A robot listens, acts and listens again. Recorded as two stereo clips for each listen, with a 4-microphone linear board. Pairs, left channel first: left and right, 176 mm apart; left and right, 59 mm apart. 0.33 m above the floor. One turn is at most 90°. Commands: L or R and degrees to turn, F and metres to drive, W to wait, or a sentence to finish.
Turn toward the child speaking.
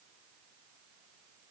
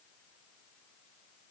W
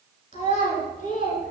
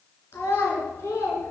L50
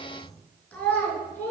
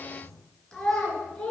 L15
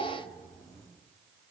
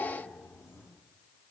W
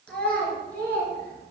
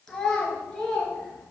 L10
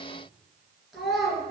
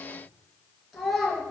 Found it: a child speaking, straight ahead, 2 to 4 m away.